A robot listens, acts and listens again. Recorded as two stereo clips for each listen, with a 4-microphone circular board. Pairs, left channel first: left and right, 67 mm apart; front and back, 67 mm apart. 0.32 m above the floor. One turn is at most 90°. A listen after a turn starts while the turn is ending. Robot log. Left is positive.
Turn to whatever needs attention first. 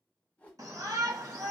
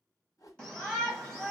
note: The shout: 75° right.
cmd yaw -75
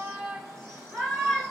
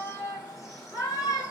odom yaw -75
note: The shout is now 15° left.
cmd yaw +15
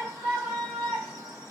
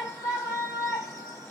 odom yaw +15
end: Facing the shout, 1 to 2 m away.